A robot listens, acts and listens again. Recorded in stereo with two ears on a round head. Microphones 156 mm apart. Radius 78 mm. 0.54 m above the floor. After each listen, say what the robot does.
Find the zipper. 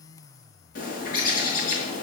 Keep listening.
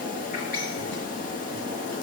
Keep listening.
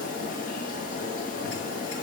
I can't make out a zipper, only a bird.